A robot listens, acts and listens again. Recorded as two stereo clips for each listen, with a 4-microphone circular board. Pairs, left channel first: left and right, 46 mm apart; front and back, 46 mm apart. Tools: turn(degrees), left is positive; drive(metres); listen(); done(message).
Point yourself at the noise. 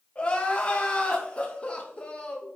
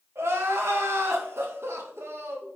turn(degrees=155)
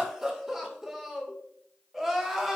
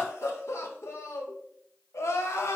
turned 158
done("Facing the crying, 1 to 2 m away.")